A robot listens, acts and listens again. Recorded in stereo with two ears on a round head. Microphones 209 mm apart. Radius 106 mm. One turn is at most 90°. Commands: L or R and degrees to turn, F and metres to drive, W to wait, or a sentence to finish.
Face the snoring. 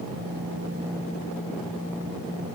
W
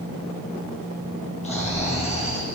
L30
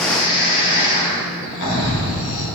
L90
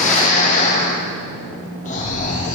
L35
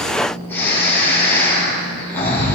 L10
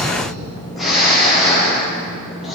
Facing the snoring, 2 to 4 m away.